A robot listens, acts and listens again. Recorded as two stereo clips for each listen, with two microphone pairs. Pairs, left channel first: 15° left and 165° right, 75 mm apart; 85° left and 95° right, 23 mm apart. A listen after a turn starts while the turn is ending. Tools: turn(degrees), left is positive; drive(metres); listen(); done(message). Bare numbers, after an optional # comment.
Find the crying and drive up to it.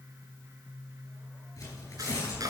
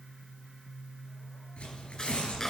listen()
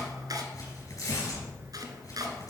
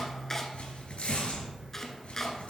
listen()
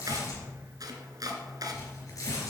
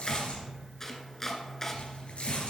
done("I can't make out crying to turn to.")